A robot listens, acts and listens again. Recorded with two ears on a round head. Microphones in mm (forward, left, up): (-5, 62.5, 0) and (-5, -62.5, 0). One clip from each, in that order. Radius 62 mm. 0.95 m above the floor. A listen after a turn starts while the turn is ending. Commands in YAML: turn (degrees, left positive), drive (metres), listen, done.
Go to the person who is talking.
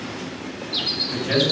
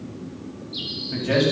turn: 15
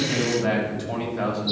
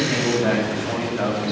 drive: 1.0
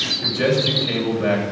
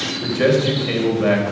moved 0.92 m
drive: 1.0
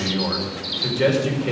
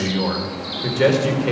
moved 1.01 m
drive: 1.0
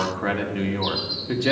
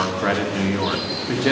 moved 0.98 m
turn: -10
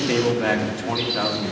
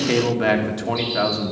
drive: 1.0
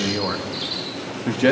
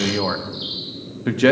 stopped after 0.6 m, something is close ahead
done: "Arrived at the man speaking, straight ahead."